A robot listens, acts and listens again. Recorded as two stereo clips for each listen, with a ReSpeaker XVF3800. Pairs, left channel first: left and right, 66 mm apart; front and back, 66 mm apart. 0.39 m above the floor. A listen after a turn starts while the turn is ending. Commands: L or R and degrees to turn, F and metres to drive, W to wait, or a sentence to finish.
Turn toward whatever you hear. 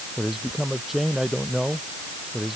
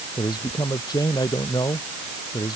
Facing the man speaking.